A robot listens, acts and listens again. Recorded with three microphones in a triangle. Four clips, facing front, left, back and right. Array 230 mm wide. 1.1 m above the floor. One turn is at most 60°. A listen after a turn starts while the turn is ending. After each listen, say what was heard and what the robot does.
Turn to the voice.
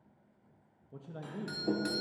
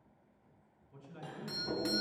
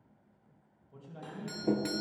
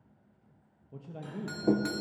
The man speaking: 50° right. Turn 50° right.
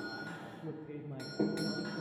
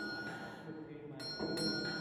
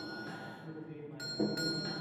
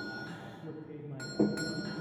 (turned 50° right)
The man speaking is now 25° right. Turn 25° right.
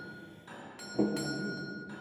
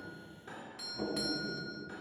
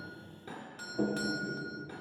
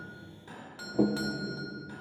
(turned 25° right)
Keep listening.
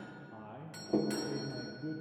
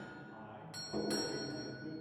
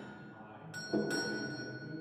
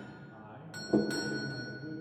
The man speaking is now 10° right. Turn 10° right.
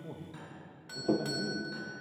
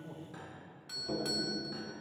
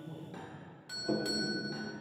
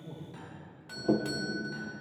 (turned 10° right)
Facing the man speaking.